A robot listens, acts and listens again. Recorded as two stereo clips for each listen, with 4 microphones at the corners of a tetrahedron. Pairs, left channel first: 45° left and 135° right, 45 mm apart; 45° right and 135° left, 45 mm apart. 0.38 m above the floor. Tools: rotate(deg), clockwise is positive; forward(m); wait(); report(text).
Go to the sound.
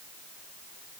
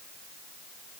wait()
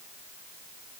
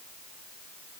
wait()
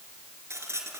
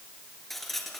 rotate(130)
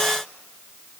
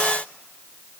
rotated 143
rotate(-15)
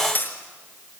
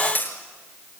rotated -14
forward(1.0)
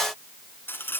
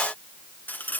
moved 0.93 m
forward(1.0)
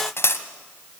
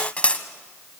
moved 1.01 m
rotate(-20)
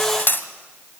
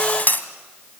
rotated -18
forward(1.0)
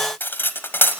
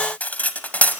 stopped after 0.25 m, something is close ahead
rotate(-10)
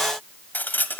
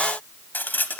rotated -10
report("I am next to the cutlery clinking.")